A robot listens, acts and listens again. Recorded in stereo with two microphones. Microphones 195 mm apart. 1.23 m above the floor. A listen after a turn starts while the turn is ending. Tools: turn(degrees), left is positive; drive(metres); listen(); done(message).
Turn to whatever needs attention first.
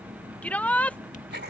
turn(degrees=30)
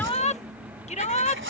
turn(degrees=145)
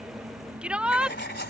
done("Facing the shout.")